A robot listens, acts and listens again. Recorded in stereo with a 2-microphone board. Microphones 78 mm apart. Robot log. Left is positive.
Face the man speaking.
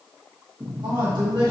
cmd yaw -90
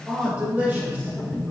note: So it is at 20° right.
cmd yaw -20
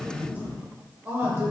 note: The man speaking is now 35° right.
cmd yaw -35
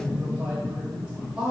note: The man speaking is now 20° right.
cmd yaw -20
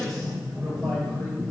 cmd idle
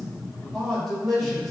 end: Facing the man speaking.